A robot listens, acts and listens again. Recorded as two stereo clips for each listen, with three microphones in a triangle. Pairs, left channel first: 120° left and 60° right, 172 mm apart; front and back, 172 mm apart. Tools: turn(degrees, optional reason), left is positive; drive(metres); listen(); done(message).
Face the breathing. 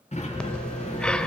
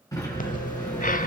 turn(degrees=35, reason="The breathing: 35° left.")
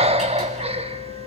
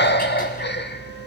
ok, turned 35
done("Found it: breathing, straight ahead, under 1 m away.")